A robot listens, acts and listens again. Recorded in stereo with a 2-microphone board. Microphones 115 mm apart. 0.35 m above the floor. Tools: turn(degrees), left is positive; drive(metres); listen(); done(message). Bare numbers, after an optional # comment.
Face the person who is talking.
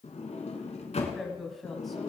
turn(30)
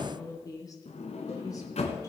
# So it is at 150° left.
turn(150)
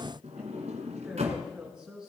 done("Facing the woman speaking.")